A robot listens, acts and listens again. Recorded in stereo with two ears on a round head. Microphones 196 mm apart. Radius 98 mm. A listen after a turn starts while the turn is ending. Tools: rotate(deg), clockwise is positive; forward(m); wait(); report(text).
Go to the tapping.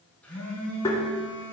rotate(-15)
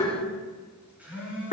rotate(-150)
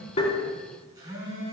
wait()
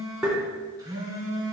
forward(1.0)
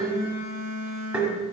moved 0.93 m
forward(1.0)
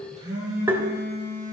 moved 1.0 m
rotate(10)
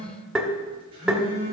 forward(1.0)
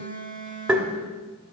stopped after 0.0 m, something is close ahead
report("Arrived at the tapping, straight ahead.")